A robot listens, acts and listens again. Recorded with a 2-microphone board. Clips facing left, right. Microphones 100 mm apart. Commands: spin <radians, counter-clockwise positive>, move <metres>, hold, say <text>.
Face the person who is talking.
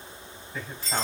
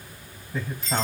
spin -0.44
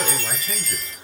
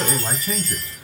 hold
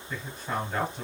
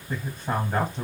spin -2.09
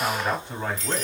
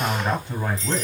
say Found it: a man speaking, straight ahead.